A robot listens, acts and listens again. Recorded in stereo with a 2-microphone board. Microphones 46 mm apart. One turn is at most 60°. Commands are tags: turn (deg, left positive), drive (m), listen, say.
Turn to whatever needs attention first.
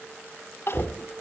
<turn deg="55"/>
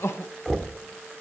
<turn deg="60"/>
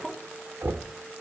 <say>Facing the crying, under 1 m away.</say>